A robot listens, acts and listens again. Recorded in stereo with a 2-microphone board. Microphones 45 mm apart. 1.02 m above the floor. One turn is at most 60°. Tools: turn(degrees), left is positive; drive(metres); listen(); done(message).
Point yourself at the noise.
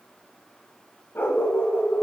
turn(degrees=60)
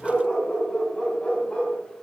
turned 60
turn(degrees=25)
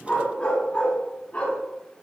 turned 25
turn(degrees=30)
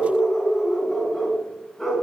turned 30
turn(degrees=10)
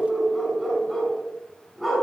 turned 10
done("Facing the dog barking.")